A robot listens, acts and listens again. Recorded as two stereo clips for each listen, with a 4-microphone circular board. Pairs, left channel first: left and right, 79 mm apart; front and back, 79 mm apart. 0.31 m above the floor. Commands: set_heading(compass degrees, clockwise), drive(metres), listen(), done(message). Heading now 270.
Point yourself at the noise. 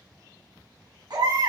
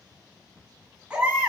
set_heading(20)
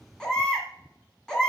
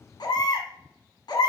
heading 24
set_heading(14)
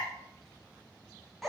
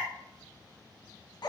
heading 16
done("Found it: a baby crying, straight ahead.")